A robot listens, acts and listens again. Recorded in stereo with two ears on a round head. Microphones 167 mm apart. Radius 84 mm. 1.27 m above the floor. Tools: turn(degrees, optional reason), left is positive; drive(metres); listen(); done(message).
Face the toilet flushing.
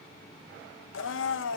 listen()
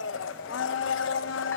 listen()
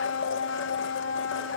done("I can't make out a toilet flushing, only a blender.")